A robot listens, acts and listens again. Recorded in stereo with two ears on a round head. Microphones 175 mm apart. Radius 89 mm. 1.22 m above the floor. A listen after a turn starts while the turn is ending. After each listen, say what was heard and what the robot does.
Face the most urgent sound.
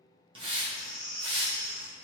The baby crying: about 75° right or 105° right. Turn 75° right.
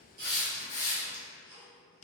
Keep listening.
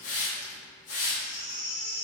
Found it: a baby crying, straight ahead, 1 to 2 m away.